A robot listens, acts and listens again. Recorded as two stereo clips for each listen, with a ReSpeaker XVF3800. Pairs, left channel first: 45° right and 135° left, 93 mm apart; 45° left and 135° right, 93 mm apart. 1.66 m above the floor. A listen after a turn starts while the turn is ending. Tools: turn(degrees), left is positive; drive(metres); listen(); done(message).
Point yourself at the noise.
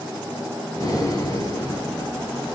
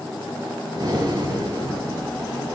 turn(degrees=-95)
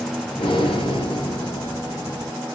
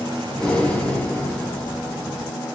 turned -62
turn(degrees=-30)
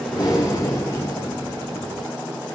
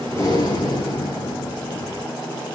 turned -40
turn(degrees=10)
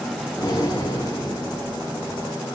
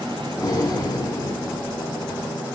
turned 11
done("Found it: breathing, straight ahead.")